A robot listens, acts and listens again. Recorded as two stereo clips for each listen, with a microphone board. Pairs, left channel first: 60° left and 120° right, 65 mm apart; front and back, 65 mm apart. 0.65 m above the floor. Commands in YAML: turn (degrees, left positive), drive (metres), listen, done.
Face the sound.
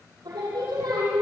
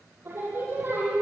turn: -120
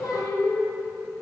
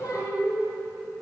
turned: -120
turn: 30
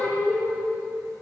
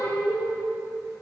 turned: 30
done: "Found it: singing, straight ahead, over 4 m away."